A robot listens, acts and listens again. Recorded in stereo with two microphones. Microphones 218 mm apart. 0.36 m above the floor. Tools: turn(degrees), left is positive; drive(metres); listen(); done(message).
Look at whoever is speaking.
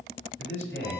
turn(degrees=65)
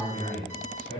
turn(degrees=25)
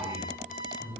turn(degrees=15)
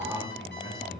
done("Facing the man speaking, 2 to 4 m away.")